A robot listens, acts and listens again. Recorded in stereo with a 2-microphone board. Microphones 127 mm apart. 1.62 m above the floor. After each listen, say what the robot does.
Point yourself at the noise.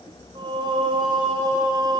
Turn 35° right.
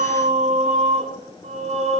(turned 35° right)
Turn 115° right.
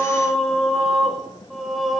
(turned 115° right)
Found it: singing, straight ahead, over 4 m away.